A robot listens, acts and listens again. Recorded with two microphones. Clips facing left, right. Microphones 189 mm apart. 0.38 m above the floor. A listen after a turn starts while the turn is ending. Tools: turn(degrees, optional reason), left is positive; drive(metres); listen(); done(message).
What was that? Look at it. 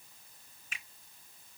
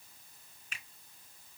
turn(degrees=45, reason="The finger snap: about 45° left or 135° left.")
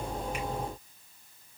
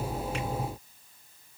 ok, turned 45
listen()
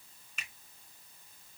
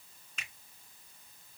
done("Found it: a finger snap, straight ahead.")